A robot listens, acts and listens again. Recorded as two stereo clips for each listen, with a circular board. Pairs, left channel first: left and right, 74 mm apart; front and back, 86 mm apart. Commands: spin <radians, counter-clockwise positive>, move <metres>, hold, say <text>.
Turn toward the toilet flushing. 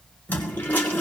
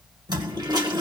spin 2.71
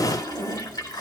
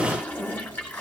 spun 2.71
spin 1.22
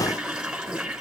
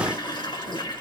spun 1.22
spin -0.17
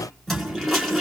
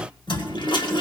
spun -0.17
say Found it: a toilet flushing, straight ahead, 2 to 4 m away.